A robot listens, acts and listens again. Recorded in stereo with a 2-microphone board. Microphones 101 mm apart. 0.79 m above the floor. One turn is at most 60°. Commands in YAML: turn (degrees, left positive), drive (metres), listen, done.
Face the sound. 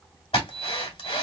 turn: 60
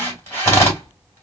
turn: 30
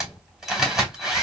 done: "Facing the drill, 2 to 4 m away."